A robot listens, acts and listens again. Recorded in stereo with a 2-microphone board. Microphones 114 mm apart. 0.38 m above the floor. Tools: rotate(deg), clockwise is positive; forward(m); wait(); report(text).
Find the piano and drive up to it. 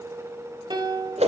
rotate(40)
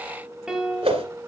forward(1.0)
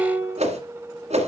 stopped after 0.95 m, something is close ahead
rotate(20)
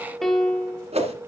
report("I am next to the piano.")